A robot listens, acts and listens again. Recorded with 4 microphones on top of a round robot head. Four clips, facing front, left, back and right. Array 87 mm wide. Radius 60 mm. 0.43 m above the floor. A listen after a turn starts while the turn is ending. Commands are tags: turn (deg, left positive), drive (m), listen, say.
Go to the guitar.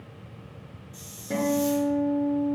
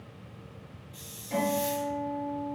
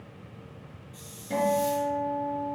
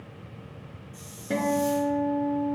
<turn deg="-60"/>
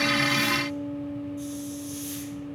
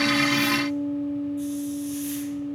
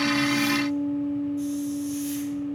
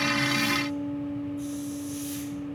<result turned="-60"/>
<drive m="1.0"/>
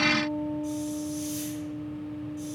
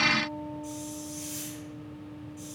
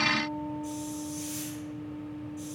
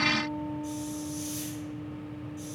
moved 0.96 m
<listen/>
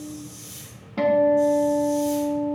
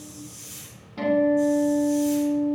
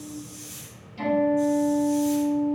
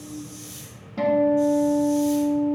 <turn deg="-10"/>
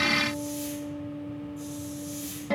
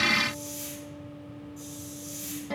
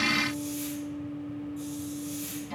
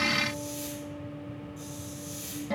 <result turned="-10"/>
<drive m="1.0"/>
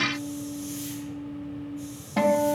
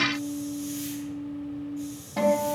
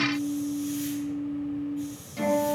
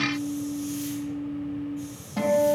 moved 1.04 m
<turn deg="10"/>
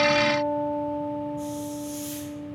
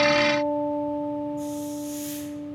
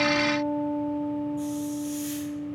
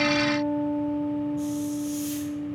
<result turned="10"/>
<drive m="1.0"/>
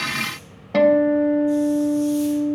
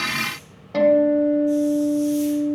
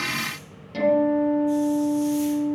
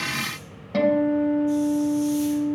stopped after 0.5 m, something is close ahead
<say>Arrived at the guitar, straight ahead.</say>